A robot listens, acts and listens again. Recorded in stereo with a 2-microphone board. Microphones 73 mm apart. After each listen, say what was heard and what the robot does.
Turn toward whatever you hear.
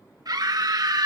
The scream: about 60° right or 120° right. Turn 60° right.
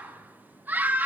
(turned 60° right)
So it is at 30° right. Turn 30° right.
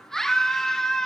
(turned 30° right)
Found it: a scream, straight ahead, 1 to 2 m away.